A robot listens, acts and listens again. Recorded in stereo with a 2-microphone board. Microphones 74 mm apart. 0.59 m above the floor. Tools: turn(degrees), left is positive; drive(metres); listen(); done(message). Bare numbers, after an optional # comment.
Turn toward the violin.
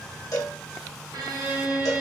# The violin: about 70° right or 110° right.
turn(-70)
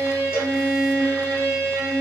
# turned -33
# So it is at 65° right.
turn(-65)
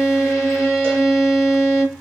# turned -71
done("Found it: a violin, straight ahead.")